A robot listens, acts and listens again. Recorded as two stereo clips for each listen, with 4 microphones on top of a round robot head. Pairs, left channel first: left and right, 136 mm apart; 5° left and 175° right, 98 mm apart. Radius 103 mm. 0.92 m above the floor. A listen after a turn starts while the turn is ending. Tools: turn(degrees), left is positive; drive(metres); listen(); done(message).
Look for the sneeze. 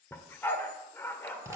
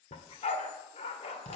listen()
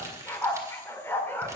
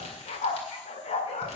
listen()
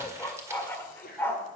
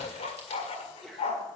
turn(degrees=95)
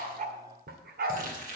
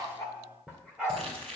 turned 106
turn(degrees=-10)
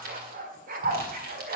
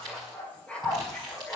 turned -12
done("Facing where the sneeze came from. I can't hear it now.")